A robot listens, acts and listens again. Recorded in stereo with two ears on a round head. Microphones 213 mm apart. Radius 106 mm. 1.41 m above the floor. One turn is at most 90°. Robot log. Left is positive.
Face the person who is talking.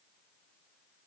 cmd idle
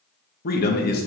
note: The man speaking: about 40° left or 140° left.
cmd yaw +40
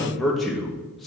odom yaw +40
end: Facing the man speaking.